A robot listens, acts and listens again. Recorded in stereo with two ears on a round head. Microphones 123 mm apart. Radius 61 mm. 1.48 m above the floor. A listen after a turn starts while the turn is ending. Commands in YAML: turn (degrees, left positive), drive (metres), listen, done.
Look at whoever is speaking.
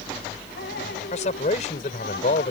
turn: 55
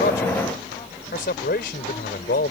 turn: 70
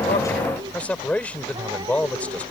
turn: 10
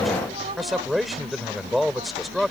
done: "Found it: a man speaking, straight ahead."